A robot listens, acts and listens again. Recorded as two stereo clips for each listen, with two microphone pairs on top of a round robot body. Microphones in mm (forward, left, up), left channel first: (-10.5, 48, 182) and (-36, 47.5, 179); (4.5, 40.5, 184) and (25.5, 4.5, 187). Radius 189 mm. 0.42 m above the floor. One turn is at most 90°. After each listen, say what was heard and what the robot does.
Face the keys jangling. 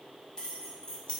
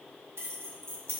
The keys jangling: 50° right. Turn 50° right.
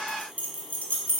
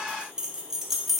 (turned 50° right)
The keys jangling is now 25° left. Turn 25° left.
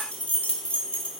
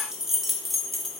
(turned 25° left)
The keys jangling is now 35° left. Turn 35° left.
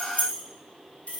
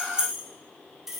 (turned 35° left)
The keys jangling is now 25° left. Turn 25° left.
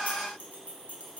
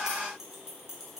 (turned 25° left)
Keep listening.
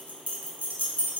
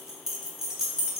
The keys jangling is now 20° left. Turn 20° left.
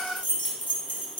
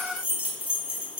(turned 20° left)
Found it: keys jangling, straight ahead, 1 to 2 m away.